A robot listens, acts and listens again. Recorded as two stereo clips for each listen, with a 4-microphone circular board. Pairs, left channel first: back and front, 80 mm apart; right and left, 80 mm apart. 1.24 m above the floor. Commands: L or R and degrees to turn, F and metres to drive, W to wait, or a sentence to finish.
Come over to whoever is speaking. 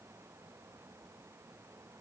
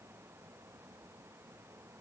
W
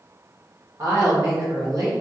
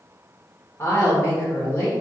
R40
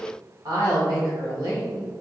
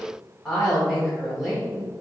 F1.0
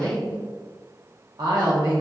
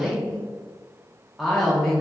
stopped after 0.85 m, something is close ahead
Arrived at the woman speaking, straight ahead.